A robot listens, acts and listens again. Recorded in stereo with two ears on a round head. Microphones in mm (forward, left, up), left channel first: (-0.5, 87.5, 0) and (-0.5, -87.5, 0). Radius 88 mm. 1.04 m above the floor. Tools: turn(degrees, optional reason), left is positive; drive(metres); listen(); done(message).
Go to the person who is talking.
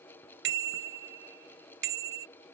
listen()
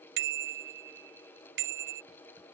listen()
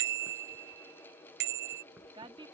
turn(degrees=-25, reason="The woman speaking: about 25° right or 155° right.")
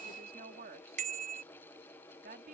turn(degrees=-130, reason="So it is at 130° right.")
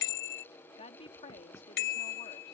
turn(degrees=30, reason="The woman speaking is now 30° left.")
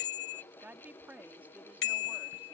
turn(degrees=-10, reason="The woman speaking is now 10° right.")
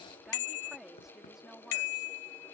drive(metres=1.0)
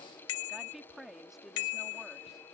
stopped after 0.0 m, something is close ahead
done("Blocked. The woman speaking is further on, straight ahead.")